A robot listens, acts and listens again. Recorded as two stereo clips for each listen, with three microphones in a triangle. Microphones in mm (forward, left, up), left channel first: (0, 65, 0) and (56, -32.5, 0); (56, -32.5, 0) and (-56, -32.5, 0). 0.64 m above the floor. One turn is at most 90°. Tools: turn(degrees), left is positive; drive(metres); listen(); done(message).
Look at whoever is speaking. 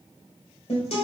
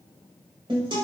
listen()
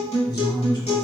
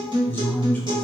turn(degrees=70)
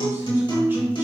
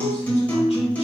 listen()
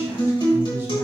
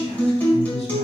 listen()
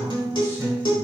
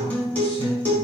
turn(degrees=10)
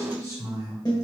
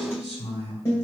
done("Facing the man speaking.")